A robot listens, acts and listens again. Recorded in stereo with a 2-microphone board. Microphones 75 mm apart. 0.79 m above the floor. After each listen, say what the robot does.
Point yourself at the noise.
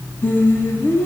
Turn 25° left.
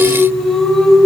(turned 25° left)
Facing the singing.